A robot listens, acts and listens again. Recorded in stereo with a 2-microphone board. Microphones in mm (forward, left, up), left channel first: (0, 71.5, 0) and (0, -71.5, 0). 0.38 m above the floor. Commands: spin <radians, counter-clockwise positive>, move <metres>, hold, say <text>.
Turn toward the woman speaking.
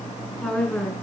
spin 0.52
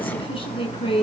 spin 2.44
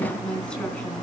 hold
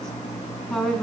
say Facing the woman speaking.